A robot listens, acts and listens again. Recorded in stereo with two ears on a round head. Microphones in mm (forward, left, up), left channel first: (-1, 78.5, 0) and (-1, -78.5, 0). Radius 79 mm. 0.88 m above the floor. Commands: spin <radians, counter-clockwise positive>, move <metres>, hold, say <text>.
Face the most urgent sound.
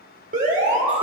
spin -0.79
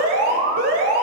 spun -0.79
spin -1.48
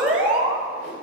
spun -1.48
say Found it: an alarm, straight ahead.